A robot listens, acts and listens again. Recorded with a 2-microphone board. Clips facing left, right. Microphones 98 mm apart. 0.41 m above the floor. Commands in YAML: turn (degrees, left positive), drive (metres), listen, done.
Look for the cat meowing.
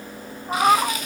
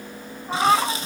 turn: 30
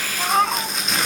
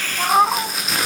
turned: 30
turn: -20
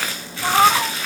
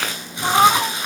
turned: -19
done: "Facing the cat meowing."